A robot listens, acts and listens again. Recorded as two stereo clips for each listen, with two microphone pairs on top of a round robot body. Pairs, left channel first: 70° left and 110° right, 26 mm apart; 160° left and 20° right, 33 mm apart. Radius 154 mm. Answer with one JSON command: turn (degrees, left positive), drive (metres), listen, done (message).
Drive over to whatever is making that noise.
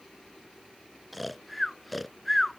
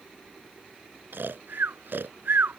{"turn": -20}
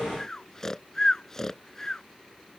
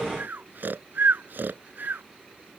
{"drive": 1.0}
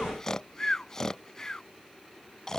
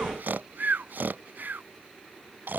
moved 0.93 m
{"drive": 1.0}
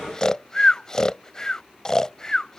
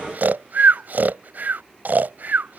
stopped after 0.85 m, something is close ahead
{"done": "I am next to the snoring."}